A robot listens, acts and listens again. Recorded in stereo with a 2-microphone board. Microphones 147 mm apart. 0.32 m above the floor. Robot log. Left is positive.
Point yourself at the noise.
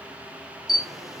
cmd yaw +30
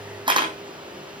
note: So it is at 35° right.
cmd yaw -35
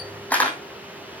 note: The camera shutter is now 10° left.
cmd yaw +10
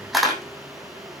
end: Found it: a camera shutter, straight ahead, 2 to 4 m away.